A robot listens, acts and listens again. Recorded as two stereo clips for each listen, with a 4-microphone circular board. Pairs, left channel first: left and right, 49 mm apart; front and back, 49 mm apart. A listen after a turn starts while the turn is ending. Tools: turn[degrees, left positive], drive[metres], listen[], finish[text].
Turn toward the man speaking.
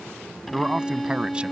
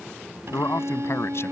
Thought: The man speaking: 20° right.
Action: turn[-20]
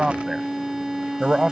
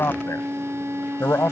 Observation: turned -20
Thought: The man speaking is now 15° right.
Action: turn[-15]
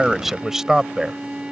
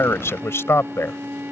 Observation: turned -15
Thought: The man speaking is now 15° right.
Action: turn[-15]
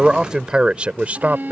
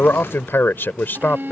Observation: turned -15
Thought: The man speaking is now 45° right.
Action: turn[-45]
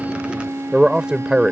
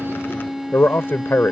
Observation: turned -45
Thought: The man speaking is now 20° right.
Action: turn[-20]
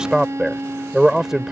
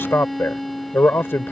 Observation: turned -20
Thought: The man speaking is now 10° right.
Action: turn[-10]
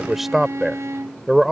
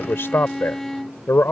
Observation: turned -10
Action: finish[Facing the man speaking.]